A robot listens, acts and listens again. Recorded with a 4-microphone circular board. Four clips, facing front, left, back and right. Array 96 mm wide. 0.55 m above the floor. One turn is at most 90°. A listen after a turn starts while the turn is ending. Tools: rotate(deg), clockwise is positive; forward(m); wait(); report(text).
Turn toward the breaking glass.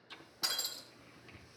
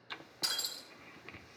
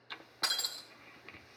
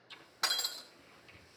rotate(90)
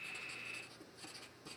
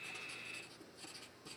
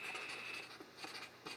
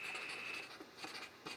rotate(30)
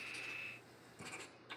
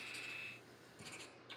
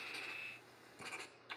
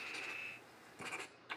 report("Facing where the breaking glass came from. I can't hear it now.")